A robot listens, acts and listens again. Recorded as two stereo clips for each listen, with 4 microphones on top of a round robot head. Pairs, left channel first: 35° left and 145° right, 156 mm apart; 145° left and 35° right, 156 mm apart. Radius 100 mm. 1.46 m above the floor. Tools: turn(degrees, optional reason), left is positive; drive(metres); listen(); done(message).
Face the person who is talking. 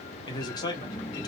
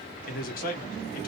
turn(degrees=105, reason="The man speaking: 105° left.")
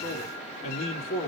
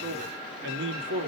turn(degrees=-20, reason="The man speaking is now 20° right.")
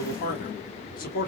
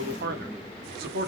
done("Found it: a man speaking, straight ahead.")